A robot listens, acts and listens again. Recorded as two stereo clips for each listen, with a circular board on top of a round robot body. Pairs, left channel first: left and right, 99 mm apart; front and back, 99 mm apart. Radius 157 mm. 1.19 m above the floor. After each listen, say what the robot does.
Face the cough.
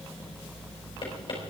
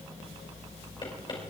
Keep listening.
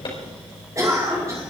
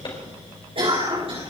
Turn 150° right.
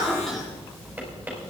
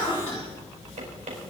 Facing the cough.